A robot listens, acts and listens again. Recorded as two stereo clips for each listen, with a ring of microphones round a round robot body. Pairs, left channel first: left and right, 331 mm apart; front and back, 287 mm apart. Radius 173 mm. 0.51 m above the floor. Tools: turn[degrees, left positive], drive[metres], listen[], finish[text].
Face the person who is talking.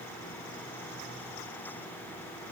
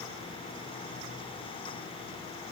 Action: listen[]
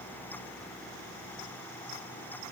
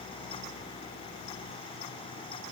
Action: listen[]
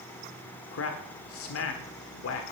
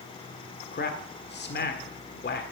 Thought: The man speaking: 50° left.
Action: turn[50]
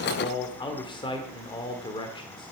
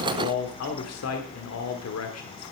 Thought: The man speaking is now 15° left.
Action: turn[15]
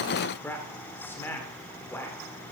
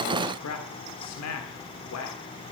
Action: finish[Facing the man speaking, 1 to 2 m away.]